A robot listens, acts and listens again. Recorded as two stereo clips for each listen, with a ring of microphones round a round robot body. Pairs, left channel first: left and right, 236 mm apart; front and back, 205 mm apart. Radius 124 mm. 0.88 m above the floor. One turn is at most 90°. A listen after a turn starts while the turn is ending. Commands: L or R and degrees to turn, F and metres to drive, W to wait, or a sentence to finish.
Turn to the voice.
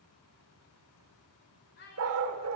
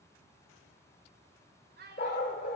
L90
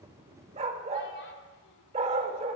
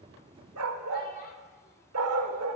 L50
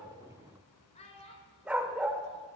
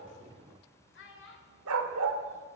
L25
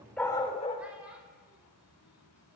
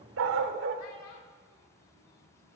W
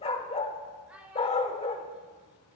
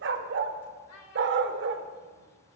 Facing the child speaking.